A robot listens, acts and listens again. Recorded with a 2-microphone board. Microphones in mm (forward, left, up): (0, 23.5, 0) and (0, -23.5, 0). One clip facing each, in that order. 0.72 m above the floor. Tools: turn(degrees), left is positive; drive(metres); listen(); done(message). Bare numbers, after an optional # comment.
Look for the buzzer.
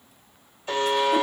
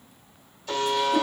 # The buzzer: about 30° left or 150° left.
turn(30)
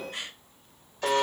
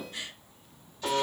# So it is at 120° left.
turn(120)
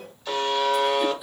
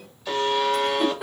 done("Facing the buzzer, 1 to 2 m away.")